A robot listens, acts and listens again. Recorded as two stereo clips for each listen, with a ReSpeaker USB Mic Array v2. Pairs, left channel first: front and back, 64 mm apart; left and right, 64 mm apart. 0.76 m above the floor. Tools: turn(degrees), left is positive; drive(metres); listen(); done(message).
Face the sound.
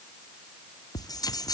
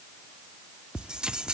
turn(degrees=-10)
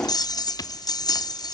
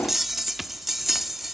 done("Found it: a bell, straight ahead.")